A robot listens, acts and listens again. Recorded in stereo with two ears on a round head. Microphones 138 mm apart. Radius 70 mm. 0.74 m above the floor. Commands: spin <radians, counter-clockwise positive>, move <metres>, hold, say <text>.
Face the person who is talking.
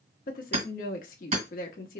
spin 1.13
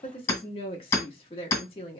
spin 0.70
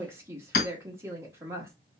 spin -0.35
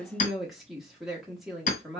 say Found it: a woman speaking, straight ahead, 1 to 2 m away.